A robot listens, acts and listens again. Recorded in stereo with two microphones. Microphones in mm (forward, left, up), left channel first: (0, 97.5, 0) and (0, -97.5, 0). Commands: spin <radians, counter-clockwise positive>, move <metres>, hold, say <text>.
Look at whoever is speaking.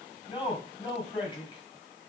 spin 0.44
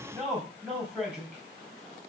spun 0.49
say Facing the man speaking, over 4 m away.